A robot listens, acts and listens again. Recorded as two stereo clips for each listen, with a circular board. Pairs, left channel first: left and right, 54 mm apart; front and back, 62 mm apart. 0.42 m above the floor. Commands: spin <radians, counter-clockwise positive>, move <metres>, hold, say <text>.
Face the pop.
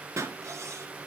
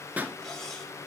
spin -2.01
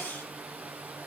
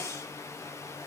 say I heard a pop from this way, but can't make it out now.